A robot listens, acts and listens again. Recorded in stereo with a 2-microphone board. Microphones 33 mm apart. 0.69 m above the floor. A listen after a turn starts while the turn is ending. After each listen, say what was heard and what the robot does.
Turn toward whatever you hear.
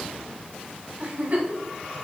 The giggle: about 45° right or 135° right. Turn 45° right.
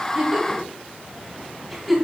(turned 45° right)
Facing the giggle, 2 to 4 m away.